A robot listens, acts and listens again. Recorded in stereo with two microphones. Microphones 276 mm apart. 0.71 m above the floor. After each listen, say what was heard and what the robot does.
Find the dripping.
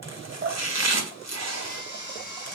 The dripping: about 45° right or 135° right. Turn 45° right.
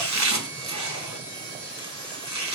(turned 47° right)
Keep listening.
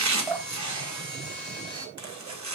Facing the dripping, 2 to 4 m away.